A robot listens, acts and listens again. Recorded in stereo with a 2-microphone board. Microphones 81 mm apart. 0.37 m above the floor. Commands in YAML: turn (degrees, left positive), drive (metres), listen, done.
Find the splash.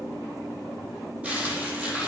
listen: true
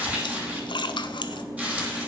turn: 90
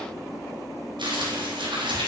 done: "Facing where the splash came from. I can't hear it now."